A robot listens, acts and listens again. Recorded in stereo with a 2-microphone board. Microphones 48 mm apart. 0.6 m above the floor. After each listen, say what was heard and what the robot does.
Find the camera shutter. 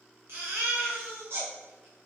Keep listening.
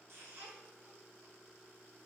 Keep listening.
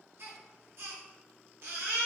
I can't make out a camera shutter to turn to.